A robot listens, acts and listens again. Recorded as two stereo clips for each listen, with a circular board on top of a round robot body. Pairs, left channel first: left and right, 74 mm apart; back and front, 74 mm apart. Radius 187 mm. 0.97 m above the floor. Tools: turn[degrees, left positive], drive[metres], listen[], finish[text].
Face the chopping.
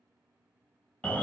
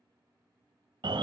Action: listen[]
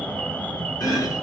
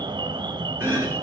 Thought: The chopping: 60° left.
Action: turn[60]
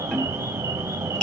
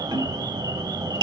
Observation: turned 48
Thought: The chopping is now 15° left.
Action: turn[15]
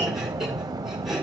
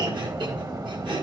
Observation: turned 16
Action: finish[Facing the chopping, 1 to 2 m away.]